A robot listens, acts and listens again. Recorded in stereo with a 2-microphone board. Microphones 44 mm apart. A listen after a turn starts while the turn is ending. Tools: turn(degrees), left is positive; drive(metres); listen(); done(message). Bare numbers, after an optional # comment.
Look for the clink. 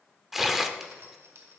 # The clink: about 55° right or 125° right.
turn(-55)
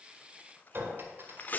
# So it is at 60° right.
turn(-60)
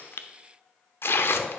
listen()
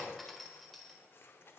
done("Found it: a clink, straight ahead.")